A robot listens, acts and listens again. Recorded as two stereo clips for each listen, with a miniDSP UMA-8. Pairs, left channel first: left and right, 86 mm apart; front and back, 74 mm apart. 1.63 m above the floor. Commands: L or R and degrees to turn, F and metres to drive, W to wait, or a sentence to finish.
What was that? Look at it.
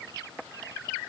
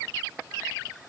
W
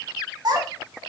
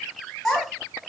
R90
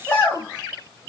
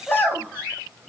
L50
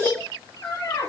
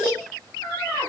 L70
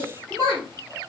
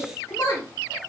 Found it: a child speaking, straight ahead, 2 to 4 m away.